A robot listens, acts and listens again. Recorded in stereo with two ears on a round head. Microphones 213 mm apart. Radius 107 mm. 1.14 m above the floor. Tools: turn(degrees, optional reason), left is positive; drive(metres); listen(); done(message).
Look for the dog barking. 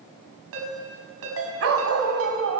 turn(degrees=-65, reason="The dog barking: about 65° right or 115° right.")
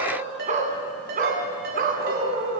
turn(degrees=-45, reason="So it is at 45° right.")
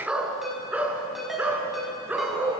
done("Facing the dog barking, 2 to 4 m away.")